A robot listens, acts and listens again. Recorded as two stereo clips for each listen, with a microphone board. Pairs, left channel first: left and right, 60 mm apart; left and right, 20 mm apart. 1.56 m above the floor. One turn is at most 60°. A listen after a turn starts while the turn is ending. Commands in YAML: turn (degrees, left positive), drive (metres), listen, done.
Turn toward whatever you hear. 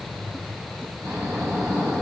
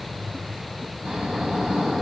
turn: -60
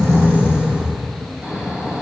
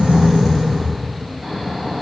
turn: -15
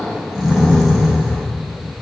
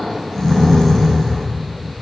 done: "Facing the snoring, 2 to 4 m away."